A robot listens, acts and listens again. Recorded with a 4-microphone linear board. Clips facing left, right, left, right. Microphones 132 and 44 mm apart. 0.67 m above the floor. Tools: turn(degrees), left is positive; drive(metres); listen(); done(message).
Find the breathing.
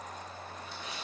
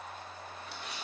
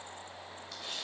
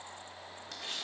listen()
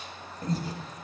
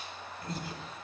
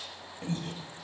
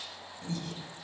turn(degrees=35)
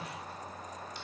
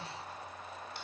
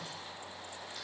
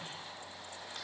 listen()
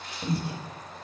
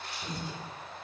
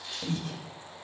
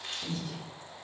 turn(degrees=100)
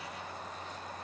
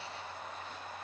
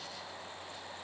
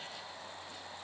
listen()
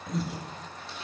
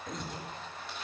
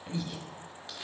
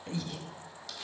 done("Facing the breathing, under 1 m away.")